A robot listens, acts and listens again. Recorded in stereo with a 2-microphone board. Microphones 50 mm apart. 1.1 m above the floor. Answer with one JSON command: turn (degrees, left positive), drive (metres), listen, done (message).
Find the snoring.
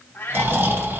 {"turn": -50}
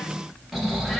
{"done": "Found it: snoring, straight ahead, 1 to 2 m away."}